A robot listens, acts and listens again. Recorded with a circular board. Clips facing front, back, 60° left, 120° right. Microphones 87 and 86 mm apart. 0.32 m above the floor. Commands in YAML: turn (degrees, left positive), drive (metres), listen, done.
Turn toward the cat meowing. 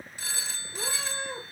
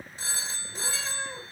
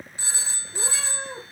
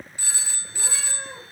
turn: 80
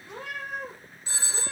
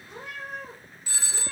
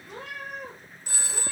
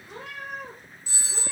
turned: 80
turn: 25
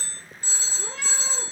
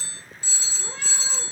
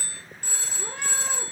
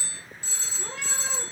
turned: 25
turn: 15
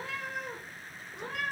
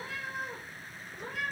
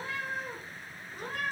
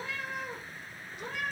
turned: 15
turn: 10
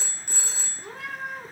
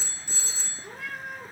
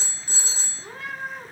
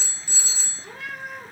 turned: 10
done: "Facing the cat meowing, 2 to 4 m away."